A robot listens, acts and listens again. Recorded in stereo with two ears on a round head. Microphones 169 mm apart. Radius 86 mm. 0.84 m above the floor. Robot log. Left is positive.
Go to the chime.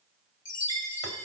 note: The chime: about 65° left or 115° left.
cmd yaw +65
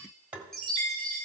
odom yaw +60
cmd fwd 1.0
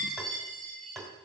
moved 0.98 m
cmd fwd 1.0
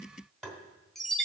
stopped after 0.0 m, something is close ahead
end: I am next to the chime.